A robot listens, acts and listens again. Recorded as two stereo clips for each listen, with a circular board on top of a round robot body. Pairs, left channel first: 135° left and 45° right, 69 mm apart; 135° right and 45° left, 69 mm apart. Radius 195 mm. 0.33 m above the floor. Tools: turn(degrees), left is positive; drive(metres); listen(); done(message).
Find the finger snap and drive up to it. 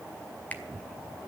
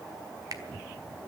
turn(degrees=65)
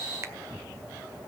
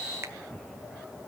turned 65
listen()
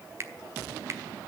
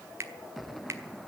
drive(metres=1.0)
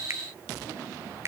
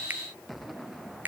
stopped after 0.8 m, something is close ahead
turn(degrees=-10)
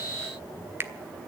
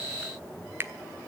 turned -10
done("Arrived at the finger snap, straight ahead.")